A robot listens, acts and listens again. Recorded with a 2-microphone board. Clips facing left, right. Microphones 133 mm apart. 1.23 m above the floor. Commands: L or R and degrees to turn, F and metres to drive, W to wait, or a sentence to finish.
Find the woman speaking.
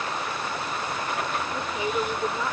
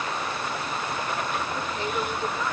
L15
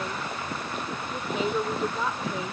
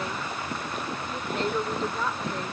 L30
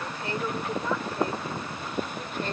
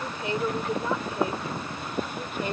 R15
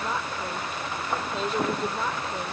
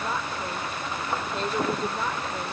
Found it: a woman speaking, straight ahead.